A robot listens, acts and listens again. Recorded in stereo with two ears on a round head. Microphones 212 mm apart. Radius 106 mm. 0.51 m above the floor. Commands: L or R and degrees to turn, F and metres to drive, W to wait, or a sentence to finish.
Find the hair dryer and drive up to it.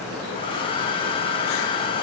L20
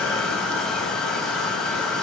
F1.0
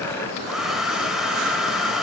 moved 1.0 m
F1.0
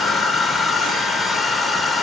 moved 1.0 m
F1.0
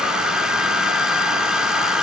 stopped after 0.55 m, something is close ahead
Arrived at the hair dryer, straight ahead.